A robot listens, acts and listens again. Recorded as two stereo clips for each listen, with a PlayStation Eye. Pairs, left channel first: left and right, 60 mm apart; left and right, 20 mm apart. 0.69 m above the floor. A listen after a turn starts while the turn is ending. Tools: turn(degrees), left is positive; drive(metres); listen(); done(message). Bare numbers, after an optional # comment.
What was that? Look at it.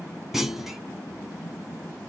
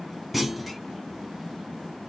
turn(-30)
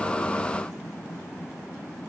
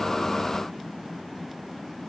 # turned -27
listen()
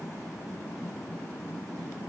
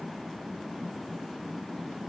done("I heard a clunk, but can't make it out now. It was about 20° left or 145° right.")